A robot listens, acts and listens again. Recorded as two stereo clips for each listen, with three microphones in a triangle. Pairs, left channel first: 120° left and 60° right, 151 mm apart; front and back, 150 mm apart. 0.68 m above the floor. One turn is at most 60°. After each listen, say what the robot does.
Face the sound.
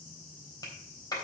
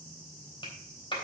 Turn 55° left.
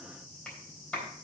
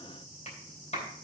Turn 35° left.
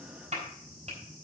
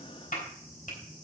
Turn 25° right.
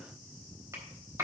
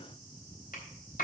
Turn 10° left.
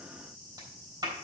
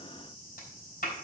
Facing the clap.